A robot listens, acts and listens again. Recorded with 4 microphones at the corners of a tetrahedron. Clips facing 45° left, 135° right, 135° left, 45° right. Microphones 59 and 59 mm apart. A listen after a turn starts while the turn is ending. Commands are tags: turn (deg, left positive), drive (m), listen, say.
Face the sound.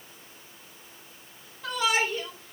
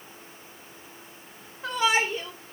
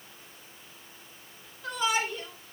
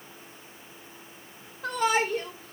<turn deg="-75"/>
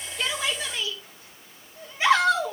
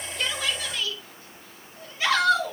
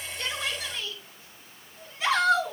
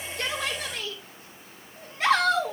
<turn deg="-20"/>
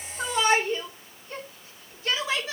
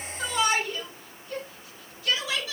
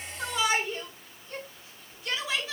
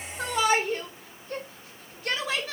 <turn deg="-10"/>
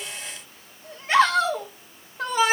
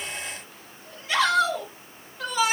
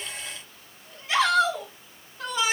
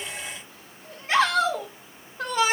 <say>Found it: a shout, straight ahead.</say>